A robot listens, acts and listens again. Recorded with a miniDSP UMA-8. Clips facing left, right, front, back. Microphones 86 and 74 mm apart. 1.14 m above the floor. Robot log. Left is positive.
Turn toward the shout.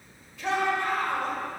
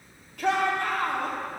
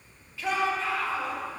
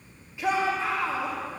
note: The shout: 110° right.
cmd yaw -110
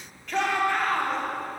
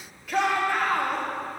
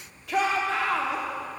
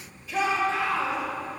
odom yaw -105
end: Found it: a shout, straight ahead.